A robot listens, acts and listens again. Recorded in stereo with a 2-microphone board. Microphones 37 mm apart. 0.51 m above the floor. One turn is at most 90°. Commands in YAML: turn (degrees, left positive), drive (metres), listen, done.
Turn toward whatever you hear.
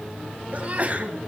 turn: -35
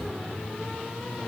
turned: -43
listen: true
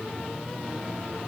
done: "I heard a sneeze, but can't make it out now. It was about 5° left or 100° right."